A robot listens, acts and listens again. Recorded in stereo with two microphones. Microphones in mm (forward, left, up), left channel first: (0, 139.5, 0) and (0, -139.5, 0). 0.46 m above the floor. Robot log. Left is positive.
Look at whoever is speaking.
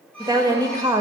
cmd yaw -30
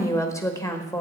note: So it is at 15° left.
cmd yaw +15
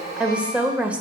end: Facing the woman speaking.